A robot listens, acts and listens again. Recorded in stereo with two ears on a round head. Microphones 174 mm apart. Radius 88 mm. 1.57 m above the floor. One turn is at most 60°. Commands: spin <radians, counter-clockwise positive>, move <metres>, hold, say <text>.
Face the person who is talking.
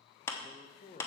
spin 0.61
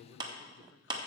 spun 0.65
hold
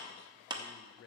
spin 1.05
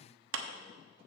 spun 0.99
spin 0.87
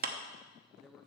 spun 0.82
say Facing the man speaking.